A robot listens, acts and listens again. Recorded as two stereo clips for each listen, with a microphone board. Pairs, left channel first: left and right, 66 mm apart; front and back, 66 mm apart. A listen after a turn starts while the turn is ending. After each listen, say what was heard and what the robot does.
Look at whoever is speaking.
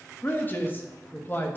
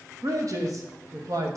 The man speaking: 150° left. Turn 150° left.
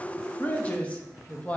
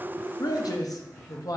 The man speaking is now 20° left. Turn 20° left.
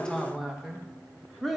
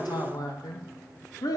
Facing the man speaking.